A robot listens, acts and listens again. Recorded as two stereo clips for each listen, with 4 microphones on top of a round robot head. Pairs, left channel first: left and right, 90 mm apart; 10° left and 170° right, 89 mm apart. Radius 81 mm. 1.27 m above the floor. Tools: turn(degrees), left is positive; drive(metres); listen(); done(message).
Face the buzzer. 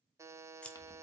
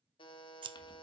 turn(degrees=-30)
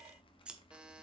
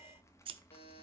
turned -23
turn(degrees=-10)
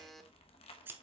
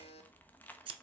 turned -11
done("Facing the buzzer, 1 to 2 m away.")